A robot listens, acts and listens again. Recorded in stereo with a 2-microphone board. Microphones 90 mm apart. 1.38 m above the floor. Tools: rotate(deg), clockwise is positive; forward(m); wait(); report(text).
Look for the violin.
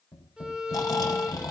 rotate(30)
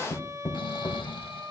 rotate(140)
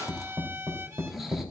rotate(35)
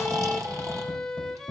report("Facing the violin.")